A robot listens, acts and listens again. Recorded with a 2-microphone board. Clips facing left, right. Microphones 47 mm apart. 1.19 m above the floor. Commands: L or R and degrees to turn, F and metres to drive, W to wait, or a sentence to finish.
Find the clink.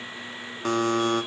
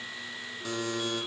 W
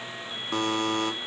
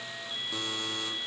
W
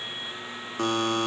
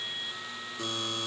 I can't make out a clink, only a buzzer.